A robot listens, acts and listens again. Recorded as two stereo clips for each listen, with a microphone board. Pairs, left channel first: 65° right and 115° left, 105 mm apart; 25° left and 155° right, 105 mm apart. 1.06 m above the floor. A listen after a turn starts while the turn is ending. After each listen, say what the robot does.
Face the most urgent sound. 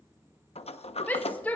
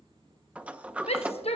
Found it: a shout, straight ahead.